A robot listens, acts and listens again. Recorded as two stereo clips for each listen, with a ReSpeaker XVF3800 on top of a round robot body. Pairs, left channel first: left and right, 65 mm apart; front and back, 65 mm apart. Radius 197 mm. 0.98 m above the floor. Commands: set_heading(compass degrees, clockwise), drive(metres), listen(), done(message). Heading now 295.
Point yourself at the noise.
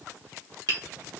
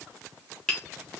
set_heading(15)
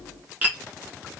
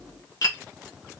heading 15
set_heading(35)
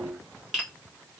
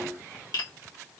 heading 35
done("Facing the tapping, 1 to 2 m away.")